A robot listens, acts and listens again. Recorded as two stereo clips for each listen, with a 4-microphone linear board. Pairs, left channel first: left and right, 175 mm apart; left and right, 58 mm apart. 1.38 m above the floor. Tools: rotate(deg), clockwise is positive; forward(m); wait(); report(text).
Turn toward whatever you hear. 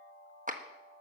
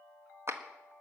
rotate(50)
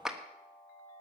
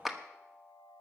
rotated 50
report("Facing the clap.")